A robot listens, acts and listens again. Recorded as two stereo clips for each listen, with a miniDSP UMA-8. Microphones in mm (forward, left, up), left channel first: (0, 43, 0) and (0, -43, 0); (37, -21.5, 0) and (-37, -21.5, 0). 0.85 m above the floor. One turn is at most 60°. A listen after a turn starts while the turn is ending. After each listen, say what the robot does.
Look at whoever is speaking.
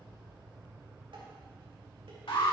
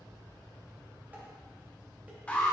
Keep listening.
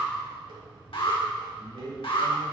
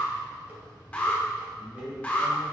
Turn 60° left.
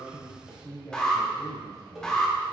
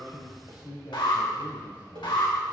Turn 35° left.
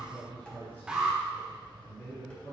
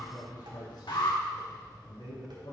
Turn 15° left.
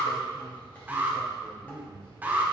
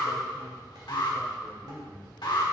Facing the man speaking.